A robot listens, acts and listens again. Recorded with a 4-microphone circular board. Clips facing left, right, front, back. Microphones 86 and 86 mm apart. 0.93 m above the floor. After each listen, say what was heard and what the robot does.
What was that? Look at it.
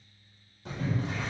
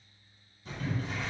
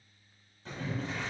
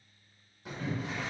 The boiling: 105° left. Turn 105° left.
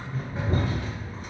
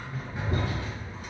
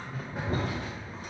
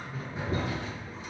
The boiling is now 35° left. Turn 35° left.
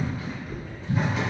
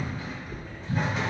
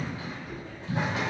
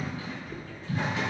Facing the boiling.